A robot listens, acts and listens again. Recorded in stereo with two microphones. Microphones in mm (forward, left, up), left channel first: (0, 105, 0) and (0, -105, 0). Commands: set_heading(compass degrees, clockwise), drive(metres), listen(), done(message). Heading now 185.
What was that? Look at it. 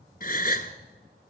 set_heading(140)
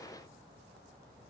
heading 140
listen()
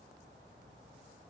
done("I heard a gasp, but can't make it out now. It was about straight ahead or 90° left.")